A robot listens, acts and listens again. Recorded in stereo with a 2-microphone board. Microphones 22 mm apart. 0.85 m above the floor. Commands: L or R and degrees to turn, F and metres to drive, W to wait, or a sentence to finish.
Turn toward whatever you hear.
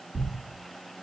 R55
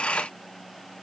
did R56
W
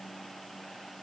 I heard a thud, but can't make it out now. It was about straight ahead or 70° right.